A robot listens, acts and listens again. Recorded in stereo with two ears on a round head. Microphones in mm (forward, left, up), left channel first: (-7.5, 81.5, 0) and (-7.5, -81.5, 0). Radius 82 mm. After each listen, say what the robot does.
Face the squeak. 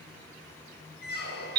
Turn 60° left.
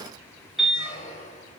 Turn 45° left.
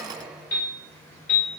Found it: a squeak, straight ahead, under 1 m away.